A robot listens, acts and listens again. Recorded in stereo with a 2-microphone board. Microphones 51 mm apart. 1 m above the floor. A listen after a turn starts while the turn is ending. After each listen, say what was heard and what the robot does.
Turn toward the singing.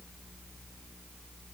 Keep listening.
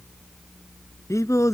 Turn 90° left.
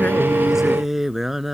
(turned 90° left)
Found it: singing, straight ahead.